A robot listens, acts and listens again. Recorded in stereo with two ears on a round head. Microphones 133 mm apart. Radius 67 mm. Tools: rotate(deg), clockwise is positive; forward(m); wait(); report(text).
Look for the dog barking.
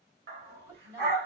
rotate(90)
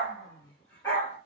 rotate(-15)
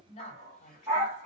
report("Facing the dog barking.")